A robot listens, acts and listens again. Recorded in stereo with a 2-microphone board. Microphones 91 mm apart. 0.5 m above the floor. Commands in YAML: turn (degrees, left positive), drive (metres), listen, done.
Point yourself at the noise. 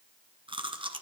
turn: -70
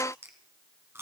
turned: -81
turn: -25
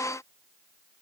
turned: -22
listen: true
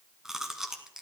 done: "Facing the chewing, 1 to 2 m away."